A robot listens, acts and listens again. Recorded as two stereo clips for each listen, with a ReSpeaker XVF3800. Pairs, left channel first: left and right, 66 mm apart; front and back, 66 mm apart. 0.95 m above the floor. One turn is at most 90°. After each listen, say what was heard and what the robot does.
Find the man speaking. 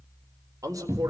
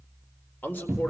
The man speaking: 60° right. Turn 60° right.
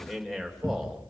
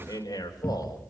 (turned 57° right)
Found it: a man speaking, straight ahead, over 4 m away.